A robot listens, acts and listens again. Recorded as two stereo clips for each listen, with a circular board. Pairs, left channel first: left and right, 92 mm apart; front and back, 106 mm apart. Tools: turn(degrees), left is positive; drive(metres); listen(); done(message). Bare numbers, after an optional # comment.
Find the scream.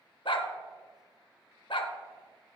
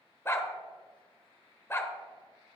listen()
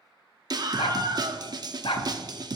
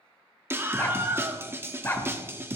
# The scream: 115° right.
turn(-115)
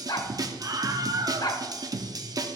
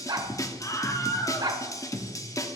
# The scream is now 50° right.
turn(-50)
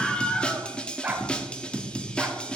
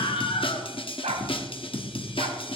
# The scream is now 10° left.
turn(10)
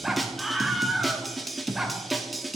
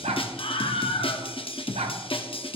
done("Found it: a scream, straight ahead.")